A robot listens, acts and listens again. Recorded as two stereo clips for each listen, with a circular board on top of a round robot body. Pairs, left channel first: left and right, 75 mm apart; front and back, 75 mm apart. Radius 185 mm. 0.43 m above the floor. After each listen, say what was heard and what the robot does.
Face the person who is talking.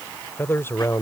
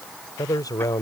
The man speaking: 30° left. Turn 30° left.
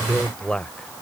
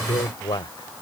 The man speaking is now 15° left. Turn 15° left.
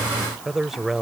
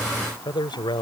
Facing the man speaking.